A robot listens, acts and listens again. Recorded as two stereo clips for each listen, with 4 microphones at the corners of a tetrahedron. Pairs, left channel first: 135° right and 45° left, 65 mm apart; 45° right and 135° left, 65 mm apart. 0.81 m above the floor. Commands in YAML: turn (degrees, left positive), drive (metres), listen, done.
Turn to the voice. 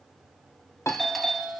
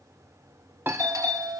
listen: true
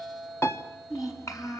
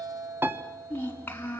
turn: -105
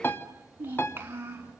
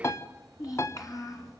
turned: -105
turn: -15
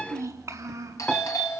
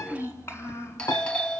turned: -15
done: "Found it: a child speaking, straight ahead, over 4 m away."